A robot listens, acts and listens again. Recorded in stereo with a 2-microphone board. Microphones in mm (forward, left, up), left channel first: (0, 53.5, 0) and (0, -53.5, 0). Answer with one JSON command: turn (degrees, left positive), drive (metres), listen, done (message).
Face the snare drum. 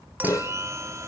{"turn": 35}
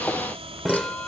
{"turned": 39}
{"done": "Facing the snare drum."}